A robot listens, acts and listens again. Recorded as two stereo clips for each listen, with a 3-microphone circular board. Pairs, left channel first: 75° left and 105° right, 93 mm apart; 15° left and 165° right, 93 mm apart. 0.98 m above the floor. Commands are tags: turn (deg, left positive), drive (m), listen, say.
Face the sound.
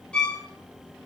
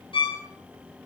<say>Facing the violin.</say>